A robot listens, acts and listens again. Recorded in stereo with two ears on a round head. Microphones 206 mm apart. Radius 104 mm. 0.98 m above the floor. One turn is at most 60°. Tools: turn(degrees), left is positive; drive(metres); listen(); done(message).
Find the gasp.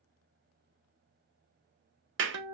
listen()
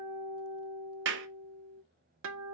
listen()
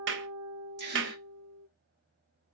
turn(degrees=-50)
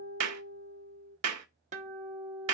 listen()
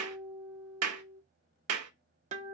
done("I heard a gasp, but can't make it out now. It was about straight ahead or 80° right.")